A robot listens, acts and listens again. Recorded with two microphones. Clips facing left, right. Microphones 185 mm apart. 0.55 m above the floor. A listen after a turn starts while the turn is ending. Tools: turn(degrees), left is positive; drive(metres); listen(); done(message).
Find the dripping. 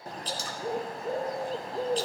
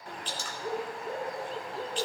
turn(degrees=35)
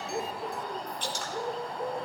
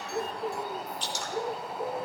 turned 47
turn(degrees=90)
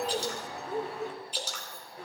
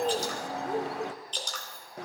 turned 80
turn(degrees=10)
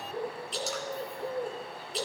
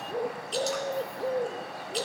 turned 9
listen()
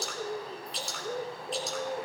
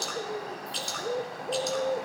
done("Found it: dripping, straight ahead.")